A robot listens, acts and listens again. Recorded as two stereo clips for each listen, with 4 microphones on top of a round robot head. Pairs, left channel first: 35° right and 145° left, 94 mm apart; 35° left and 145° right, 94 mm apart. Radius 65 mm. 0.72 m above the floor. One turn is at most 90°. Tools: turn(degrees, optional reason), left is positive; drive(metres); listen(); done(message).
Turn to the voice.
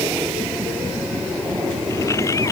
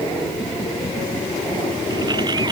listen()
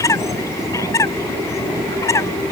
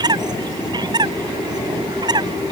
listen()
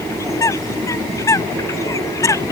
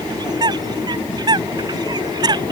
done("I can't make out anyone speaking, only a bird.")